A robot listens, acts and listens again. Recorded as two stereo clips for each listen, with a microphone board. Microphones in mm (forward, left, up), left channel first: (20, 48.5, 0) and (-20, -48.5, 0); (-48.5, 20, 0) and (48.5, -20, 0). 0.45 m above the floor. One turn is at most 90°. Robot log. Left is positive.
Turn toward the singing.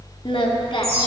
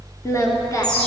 note: The singing: 100° left.
cmd yaw +90
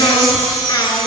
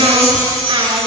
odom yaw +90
note: The singing is now 20° left.
cmd yaw +20
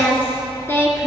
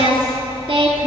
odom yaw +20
end: Facing the singing.